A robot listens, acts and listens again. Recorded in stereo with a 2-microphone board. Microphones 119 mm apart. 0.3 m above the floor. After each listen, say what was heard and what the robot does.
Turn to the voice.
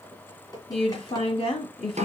The woman speaking: about 55° left or 125° left. Turn 55° left.
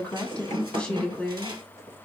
So it is at 10° left. Turn 10° left.
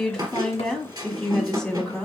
Facing the woman speaking, 1 to 2 m away.